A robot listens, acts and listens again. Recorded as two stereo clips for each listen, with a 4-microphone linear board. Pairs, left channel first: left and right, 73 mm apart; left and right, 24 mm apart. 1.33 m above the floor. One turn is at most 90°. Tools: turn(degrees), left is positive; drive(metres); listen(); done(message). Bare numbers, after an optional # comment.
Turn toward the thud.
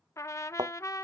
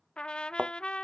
# The thud: about 70° right or 110° right.
turn(-70)
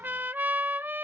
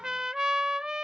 listen()
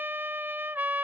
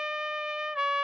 done("I heard a thud, but can't make it out now. It was about straight ahead or 40° right.")